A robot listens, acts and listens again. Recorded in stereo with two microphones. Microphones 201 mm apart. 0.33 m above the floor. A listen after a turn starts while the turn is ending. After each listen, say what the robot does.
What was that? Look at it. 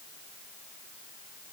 Keep listening.
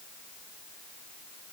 Keep listening.
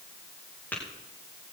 Turn 30° left.
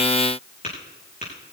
Turn 140° left.
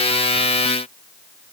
Keep listening.
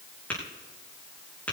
Facing the tapping, over 4 m away.